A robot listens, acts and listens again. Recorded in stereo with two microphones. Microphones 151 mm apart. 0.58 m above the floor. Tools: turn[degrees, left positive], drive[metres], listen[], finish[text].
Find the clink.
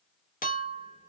Thought: The clink: about 70° left or 110° left.
Action: turn[70]
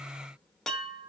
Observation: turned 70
Action: finish[Found it: a clink, straight ahead, under 1 m away.]